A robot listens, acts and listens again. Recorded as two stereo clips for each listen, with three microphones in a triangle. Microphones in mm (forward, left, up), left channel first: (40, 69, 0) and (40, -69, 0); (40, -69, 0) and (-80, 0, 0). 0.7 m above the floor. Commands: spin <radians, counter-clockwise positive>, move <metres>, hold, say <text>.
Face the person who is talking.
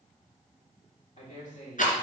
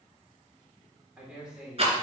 spin 1.13
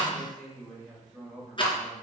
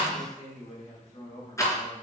say Found it: a man speaking, straight ahead.